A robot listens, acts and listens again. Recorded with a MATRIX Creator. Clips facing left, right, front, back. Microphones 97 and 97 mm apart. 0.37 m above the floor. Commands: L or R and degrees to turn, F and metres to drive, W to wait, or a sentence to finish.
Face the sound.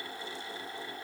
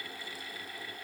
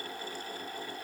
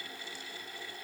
W
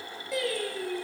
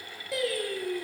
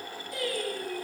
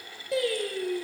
L175
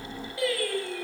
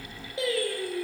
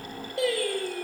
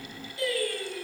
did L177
R30
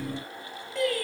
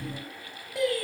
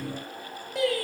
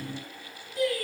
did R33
R15
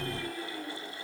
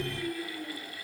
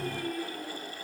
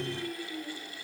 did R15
Found it: singing, straight ahead, 2 to 4 m away.